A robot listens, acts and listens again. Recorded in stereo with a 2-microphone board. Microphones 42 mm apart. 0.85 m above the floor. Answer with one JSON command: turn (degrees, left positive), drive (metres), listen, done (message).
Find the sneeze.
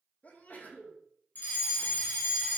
{"turn": 45}
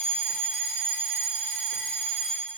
{"listen": true}
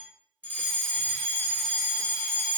{"done": "I heard a sneeze, but can't make it out now. It was about straight ahead or 90° left."}